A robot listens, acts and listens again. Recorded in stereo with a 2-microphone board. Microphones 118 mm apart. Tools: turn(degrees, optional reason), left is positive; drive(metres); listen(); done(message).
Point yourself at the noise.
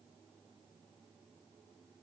listen()
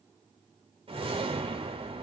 turn(degrees=-50, reason="The whoosh: about 50° right or 130° right.")
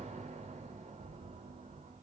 turn(degrees=-80, reason="So it is at 80° right.")
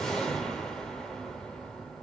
done("Facing the whoosh, 2 to 4 m away.")